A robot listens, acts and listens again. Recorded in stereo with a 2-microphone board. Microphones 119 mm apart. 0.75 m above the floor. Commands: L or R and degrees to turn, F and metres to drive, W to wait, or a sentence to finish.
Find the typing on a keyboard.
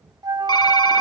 L40
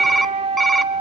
Found it: typing on a keyboard, straight ahead.